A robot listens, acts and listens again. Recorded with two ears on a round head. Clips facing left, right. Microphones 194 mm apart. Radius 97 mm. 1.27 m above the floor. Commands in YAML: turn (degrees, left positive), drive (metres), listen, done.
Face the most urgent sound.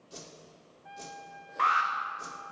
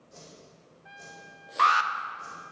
turn: -55
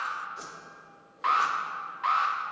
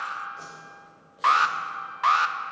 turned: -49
turn: -70
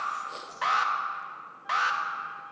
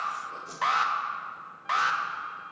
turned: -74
done: "Found it: an alarm, straight ahead, 1 to 2 m away."